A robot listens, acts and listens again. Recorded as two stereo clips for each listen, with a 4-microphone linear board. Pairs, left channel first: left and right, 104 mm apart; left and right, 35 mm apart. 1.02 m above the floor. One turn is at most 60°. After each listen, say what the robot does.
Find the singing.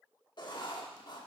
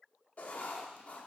Keep listening.
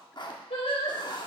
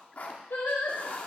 Turn 60° left.
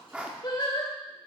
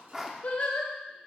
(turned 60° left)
Turn 45° left.
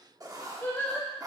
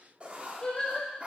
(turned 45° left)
Turn 20° left.
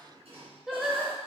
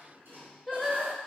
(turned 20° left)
Found it: singing, straight ahead.